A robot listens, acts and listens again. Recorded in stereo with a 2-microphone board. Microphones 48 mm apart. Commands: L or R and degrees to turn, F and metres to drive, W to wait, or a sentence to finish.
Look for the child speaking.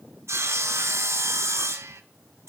W
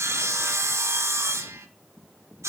W
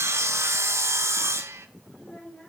L20
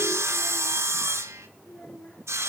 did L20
L35
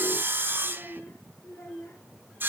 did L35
L110
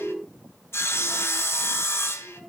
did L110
Found it: a child speaking, straight ahead, over 4 m away.